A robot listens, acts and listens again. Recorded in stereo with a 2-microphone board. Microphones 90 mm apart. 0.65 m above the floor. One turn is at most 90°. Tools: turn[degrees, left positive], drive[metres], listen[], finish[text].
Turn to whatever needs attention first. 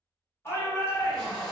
Thought: The shout: about 30° left or 150° left.
Action: turn[30]
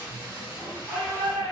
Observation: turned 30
Action: finish[Facing the shout, 1 to 2 m away.]